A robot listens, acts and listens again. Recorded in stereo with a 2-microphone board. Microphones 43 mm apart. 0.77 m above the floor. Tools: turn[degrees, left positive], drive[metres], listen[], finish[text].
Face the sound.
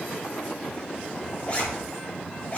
Thought: The zipper: about 35° left or 145° left.
Action: turn[35]
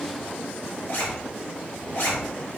Thought: So it is at 105° left.
Action: turn[105]
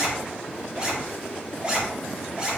Thought: The zipper is now 25° right.
Action: turn[-25]
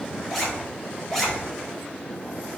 Action: finish[Facing the zipper, 2 to 4 m away.]